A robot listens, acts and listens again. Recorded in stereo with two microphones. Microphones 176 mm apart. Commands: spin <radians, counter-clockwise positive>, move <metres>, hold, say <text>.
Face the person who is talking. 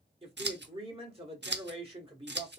spin -0.52
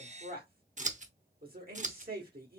spin -2.01
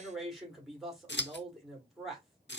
say Facing the man speaking.